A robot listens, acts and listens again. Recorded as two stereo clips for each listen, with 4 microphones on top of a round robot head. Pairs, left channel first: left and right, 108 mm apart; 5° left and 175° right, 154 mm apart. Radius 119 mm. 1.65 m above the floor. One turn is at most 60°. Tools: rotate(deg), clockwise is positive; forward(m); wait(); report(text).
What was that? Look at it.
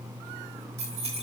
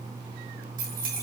rotate(60)
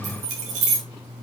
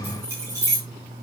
rotate(60)
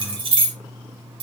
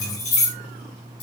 rotate(55)
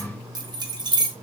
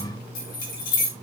rotate(40)
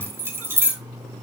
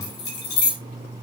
rotate(20)
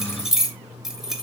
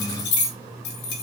report("Facing the keys jangling, 2 to 4 m away.")